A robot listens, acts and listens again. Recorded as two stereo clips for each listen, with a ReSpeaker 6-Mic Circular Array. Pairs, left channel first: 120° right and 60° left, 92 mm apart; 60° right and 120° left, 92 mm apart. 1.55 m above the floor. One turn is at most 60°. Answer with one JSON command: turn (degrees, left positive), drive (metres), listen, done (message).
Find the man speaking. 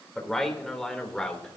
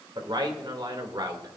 {"turn": 60}
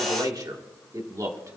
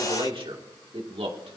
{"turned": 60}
{"turn": 60}
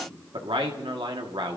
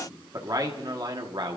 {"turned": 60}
{"turn": 60}
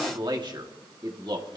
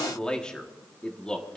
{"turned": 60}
{"turn": 20}
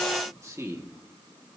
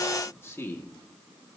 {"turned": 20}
{"done": "Found it: a man speaking, straight ahead, 1 to 2 m away."}